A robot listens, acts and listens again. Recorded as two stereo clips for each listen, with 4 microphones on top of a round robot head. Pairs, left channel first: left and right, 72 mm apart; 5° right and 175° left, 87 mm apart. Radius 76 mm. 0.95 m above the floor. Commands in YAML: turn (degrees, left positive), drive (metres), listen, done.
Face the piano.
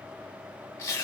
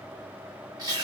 listen: true
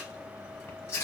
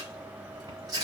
listen: true
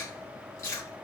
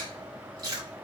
done: "I can't make out a piano, only chewing."